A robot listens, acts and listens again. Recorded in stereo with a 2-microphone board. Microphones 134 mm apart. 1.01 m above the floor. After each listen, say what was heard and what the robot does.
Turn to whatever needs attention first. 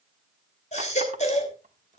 The baby crying: about 60° left or 120° left. Turn 60° left.
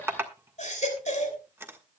So it is at 60° left. Turn 60° left.
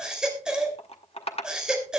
Found it: a baby crying, straight ahead, 2 to 4 m away.